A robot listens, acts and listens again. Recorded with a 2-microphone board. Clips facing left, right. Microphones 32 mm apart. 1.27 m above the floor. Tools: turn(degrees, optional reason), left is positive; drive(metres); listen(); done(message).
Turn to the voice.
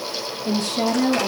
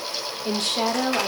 turn(degrees=-65, reason="The woman speaking: about 65° right or 115° right.")
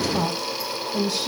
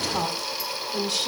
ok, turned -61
turn(degrees=-55, reason="So it is at 55° right.")
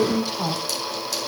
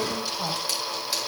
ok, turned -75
turn(degrees=20, reason="The woman speaking is now 20° left.")
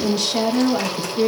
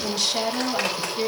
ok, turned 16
done("Found it: a woman speaking, straight ahead.")